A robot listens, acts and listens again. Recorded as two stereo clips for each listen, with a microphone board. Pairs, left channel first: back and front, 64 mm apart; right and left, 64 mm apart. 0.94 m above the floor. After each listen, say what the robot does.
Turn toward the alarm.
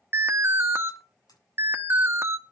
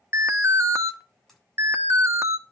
Turn 50° left.
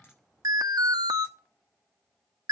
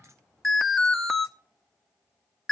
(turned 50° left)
Found it: an alarm, straight ahead.